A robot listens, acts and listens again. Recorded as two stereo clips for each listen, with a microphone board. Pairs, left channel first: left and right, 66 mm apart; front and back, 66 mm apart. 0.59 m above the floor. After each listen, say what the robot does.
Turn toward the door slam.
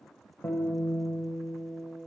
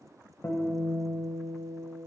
Keep listening.
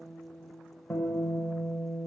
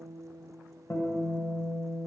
Keep listening.
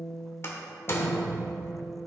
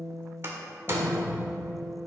Turn 135° left.
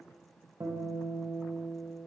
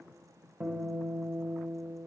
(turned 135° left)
I heard a door slam from this way, but can't make it out now.